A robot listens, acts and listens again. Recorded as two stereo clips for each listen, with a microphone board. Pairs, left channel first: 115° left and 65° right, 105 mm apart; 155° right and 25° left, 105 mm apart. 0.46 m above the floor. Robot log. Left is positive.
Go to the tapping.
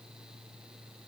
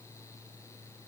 cmd idle
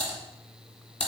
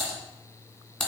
cmd idle
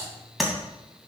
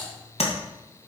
note: The tapping: 160° right.
cmd yaw -160
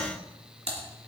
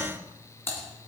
cmd idle
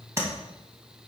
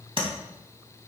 cmd fwd 1.0
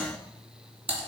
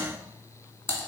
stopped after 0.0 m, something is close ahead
note: The tapping is now 10° right.
cmd yaw -10
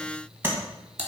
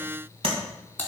end: Something is in my way. I am facing the tapping but have not reached it.